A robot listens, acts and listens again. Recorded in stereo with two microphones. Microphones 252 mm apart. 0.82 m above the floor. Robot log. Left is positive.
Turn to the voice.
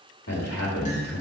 note: The man speaking: about 70° left or 110° left.
cmd yaw +70
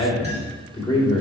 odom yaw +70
note: So it is at 20° left.
cmd yaw +20
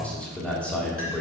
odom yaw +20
end: Facing the man speaking, 2 to 4 m away.